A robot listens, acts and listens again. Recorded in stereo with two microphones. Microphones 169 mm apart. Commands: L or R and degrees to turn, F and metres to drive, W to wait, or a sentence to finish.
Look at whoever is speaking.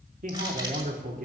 R55
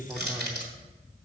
Found it: a man speaking, straight ahead.